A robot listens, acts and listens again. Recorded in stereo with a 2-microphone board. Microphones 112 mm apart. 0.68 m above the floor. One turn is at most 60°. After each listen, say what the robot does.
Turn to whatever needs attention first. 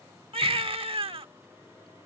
Turn 55° right.
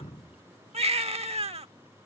Turn 60° right.
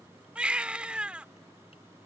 Turn 10° right.
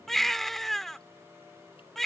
Found it: a baby crying, straight ahead.